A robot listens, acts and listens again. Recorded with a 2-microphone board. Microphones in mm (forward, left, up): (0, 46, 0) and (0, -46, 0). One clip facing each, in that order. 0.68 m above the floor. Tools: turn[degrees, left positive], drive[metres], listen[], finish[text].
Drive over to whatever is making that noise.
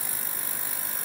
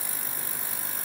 Action: listen[]
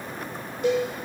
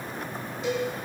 Thought: The cowbell: about 55° left or 125° left.
Action: turn[55]
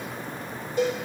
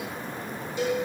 Thought: So it is at 55° left.
Action: turn[55]
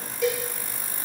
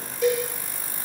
Action: drive[1.0]
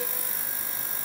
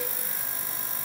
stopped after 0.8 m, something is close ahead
Action: listen[]
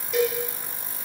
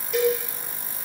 Action: finish[I am next to the cowbell.]